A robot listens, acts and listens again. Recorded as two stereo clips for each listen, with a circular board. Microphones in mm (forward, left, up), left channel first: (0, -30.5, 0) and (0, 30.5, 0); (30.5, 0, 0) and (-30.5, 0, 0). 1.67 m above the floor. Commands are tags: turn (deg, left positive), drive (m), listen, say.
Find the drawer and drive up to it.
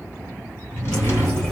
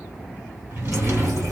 <turn deg="-135"/>
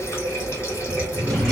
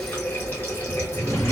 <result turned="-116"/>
<turn deg="-15"/>
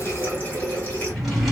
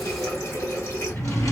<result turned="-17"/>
<drive m="1.0"/>
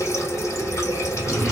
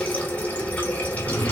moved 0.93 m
<drive m="1.0"/>
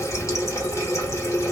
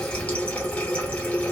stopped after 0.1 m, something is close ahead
<listen/>
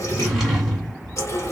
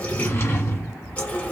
<say>I am next to the drawer.</say>